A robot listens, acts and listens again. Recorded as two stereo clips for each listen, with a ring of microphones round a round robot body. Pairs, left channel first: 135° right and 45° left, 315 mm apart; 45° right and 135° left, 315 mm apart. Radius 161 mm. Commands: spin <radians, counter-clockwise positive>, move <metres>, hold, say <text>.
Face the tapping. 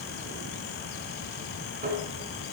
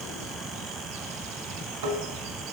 spin 1.92
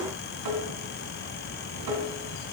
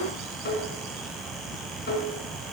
spin 0.35
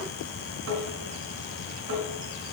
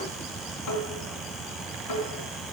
spin -0.17
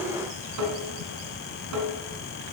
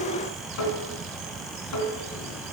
say Found it: tapping, straight ahead.